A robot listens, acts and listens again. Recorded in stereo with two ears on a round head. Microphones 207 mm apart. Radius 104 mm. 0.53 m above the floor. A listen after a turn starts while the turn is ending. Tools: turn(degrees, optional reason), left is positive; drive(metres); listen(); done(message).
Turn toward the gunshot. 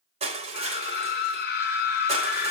listen()
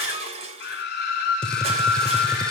turn(degrees=30)
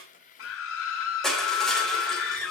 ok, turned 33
listen()
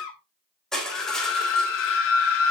done("I heard a gunshot, but can't make it out now. It was about 30° right or 145° left.")